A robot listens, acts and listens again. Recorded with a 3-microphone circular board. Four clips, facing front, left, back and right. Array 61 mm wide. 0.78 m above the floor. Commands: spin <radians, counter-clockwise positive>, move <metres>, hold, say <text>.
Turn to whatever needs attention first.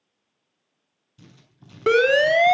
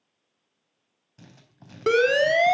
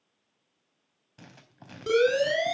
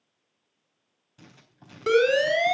spin 0.44
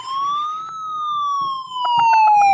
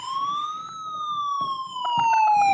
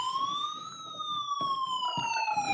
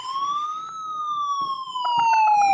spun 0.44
say Found it: a siren, straight ahead, 2 to 4 m away.